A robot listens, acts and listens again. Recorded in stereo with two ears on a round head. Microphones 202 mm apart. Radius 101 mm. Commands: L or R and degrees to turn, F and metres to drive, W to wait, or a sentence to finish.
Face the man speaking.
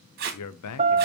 L90
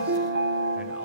W
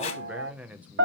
Found it: a man speaking, straight ahead, under 1 m away.